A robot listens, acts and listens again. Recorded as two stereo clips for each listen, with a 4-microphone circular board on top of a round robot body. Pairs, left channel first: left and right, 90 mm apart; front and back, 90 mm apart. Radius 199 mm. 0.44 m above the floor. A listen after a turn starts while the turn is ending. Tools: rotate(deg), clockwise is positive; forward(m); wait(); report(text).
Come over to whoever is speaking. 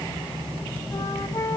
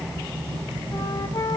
wait()
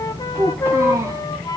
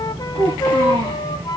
rotate(145)
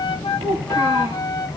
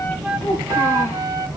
wait()
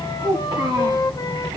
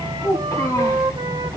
rotate(50)
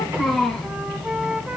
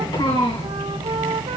forward(1.0)
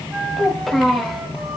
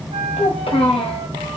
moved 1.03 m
forward(1.0)
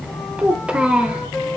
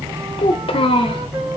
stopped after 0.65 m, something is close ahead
rotate(10)
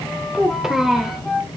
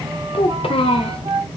report("Arrived at the child speaking, straight ahead.")